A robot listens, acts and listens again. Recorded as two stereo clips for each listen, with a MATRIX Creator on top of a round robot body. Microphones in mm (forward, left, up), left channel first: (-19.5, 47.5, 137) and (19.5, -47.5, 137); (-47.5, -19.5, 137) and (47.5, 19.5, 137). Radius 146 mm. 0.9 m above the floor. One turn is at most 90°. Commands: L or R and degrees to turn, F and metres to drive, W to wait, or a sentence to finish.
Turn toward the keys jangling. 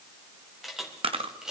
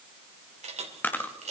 L15
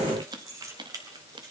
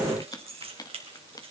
R10
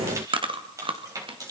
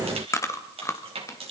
R10
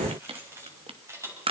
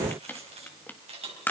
Found it: keys jangling, straight ahead.